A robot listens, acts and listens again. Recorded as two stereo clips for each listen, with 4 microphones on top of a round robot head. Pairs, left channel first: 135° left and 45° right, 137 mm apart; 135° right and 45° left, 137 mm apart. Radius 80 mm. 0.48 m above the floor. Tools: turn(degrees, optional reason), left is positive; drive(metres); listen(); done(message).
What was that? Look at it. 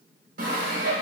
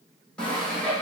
turn(degrees=-55, reason="The sawing: 55° right.")
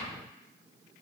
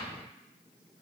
listen()
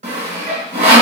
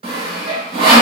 done("Facing the sawing, 1 to 2 m away.")